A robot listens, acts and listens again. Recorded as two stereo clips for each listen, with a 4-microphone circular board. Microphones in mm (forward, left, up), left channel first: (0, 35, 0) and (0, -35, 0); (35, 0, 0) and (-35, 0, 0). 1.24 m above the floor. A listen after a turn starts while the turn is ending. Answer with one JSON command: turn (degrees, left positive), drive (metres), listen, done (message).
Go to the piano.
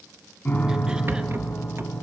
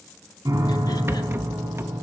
{"turn": 155}
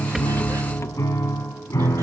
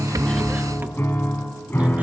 {"turn": 55}
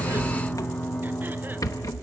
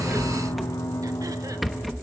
{"turn": 20}
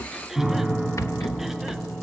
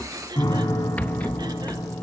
{"drive": 1.0}
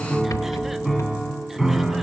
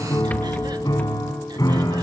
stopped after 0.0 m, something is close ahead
{"done": "Blocked. The piano is further on, straight ahead."}